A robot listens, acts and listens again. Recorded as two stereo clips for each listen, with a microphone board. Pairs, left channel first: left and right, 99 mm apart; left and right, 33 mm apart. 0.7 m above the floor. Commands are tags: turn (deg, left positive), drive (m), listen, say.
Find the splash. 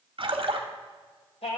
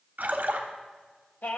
<turn deg="-60"/>
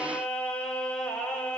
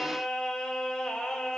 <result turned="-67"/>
<listen/>
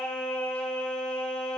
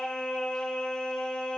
<say>I heard a splash, but can't make it out now. It was about 5° left or 50° right.</say>